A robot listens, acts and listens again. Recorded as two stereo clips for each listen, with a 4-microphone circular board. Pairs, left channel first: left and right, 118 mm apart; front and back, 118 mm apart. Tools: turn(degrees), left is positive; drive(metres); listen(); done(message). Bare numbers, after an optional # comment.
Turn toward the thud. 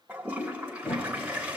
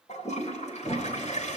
# The thud: 55° left.
turn(55)
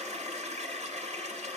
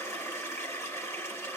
done("I heard a thud from this way, but can't make it out now.")